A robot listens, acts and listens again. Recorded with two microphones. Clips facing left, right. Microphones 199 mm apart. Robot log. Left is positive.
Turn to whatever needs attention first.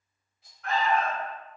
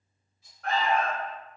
note: The alarm: about 45° right or 135° right.
cmd yaw -45
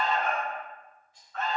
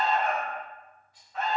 note: So it is at 10° right.
cmd yaw -10
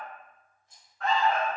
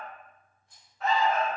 end: Facing the alarm, 1 to 2 m away.